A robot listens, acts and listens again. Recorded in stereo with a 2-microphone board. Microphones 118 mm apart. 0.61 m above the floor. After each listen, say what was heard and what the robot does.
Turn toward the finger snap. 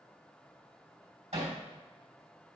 Keep listening.
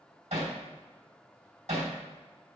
Keep listening.
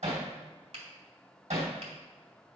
The finger snap: about 60° right or 120° right. Turn 60° right.
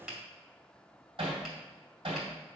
Found it: a finger snap, straight ahead.